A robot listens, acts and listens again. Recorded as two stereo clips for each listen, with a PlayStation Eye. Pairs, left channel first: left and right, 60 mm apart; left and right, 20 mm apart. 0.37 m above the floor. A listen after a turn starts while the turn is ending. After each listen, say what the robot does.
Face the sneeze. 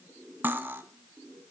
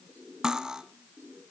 Keep listening.
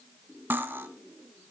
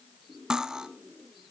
Keep listening.
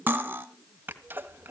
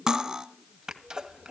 Turn 35° right.
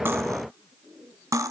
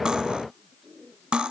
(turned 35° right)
Keep listening.
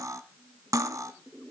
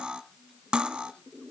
I heard a sneeze, but can't make it out now. It was about straight ahead or 110° right.